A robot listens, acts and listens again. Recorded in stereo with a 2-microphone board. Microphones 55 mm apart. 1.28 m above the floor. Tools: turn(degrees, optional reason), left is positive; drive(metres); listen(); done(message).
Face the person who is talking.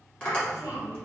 turn(degrees=70, reason="The child speaking: about 70° left or 110° left.")
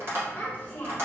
turn(degrees=35, reason="So it is at 35° left.")
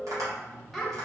done("Facing the child speaking.")